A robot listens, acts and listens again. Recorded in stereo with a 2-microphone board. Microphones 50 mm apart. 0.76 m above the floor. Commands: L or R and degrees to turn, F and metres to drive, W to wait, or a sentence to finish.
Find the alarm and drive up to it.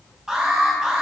R30
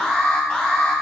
L20
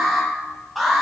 F1.0
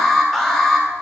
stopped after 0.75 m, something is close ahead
L10
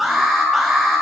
Blocked. The alarm is further on, straight ahead.